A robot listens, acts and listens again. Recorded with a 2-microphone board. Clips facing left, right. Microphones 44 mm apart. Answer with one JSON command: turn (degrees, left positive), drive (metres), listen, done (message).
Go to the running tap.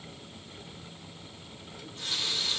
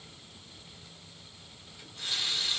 {"turn": -30}
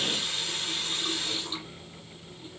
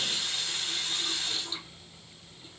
{"turn": 25}
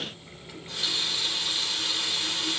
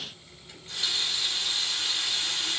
{"turn": 10}
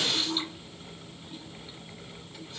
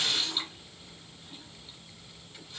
{"drive": 1.0}
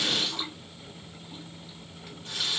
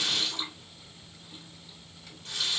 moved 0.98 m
{"turn": 10}
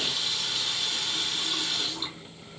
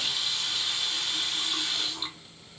{"drive": 1.0}
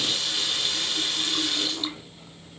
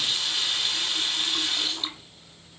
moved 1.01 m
{"drive": 1.0}
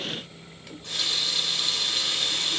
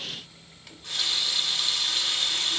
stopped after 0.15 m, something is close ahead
{"done": "I am next to the running tap."}